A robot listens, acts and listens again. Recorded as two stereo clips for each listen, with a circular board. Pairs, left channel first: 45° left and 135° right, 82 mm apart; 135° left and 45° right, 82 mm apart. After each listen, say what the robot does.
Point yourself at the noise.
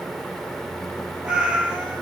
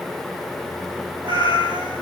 Turn 55° right.
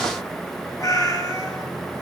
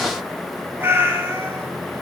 Found it: a cat meowing, straight ahead, 2 to 4 m away.